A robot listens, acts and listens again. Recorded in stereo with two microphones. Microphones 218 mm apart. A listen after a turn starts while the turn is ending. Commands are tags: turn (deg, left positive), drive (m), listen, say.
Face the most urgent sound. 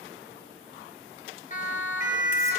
<turn deg="35"/>
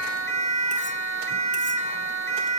<turn deg="110"/>
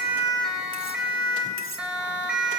<say>Found it: a siren, straight ahead.</say>